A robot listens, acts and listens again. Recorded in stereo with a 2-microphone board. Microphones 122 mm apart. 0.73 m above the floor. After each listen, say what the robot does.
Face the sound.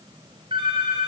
Turn 45° right.
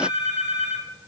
Turn 90° right.
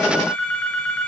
Turn 10° left.
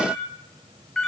Found it: a phone ringing, straight ahead.